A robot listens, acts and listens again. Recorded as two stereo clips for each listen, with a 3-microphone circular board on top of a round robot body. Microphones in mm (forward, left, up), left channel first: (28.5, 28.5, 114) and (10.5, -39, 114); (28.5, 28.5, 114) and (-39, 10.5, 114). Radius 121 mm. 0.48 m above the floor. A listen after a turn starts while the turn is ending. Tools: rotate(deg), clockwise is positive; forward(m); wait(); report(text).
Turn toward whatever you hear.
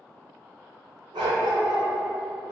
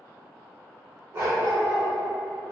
rotate(110)
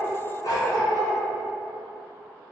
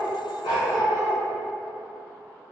rotate(-30)
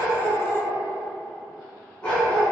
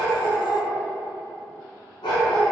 report("Found it: a dog barking, straight ahead, 1 to 2 m away.")